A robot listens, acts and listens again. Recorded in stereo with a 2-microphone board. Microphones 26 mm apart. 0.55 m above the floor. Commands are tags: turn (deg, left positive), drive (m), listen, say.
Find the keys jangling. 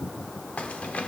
<turn deg="60"/>
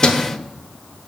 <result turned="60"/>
<turn deg="35"/>
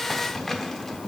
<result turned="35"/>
<turn deg="10"/>
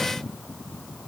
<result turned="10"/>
<listen/>
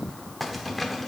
<say>Found it: keys jangling, straight ahead, under 1 m away.</say>